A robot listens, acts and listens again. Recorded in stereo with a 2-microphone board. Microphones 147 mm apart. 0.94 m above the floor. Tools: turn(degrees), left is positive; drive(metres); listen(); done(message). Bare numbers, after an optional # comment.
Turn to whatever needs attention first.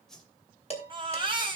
# The baby crying: about 35° right or 145° right.
turn(-35)
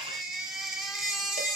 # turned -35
done("Found it: a baby crying, straight ahead, over 4 m away.")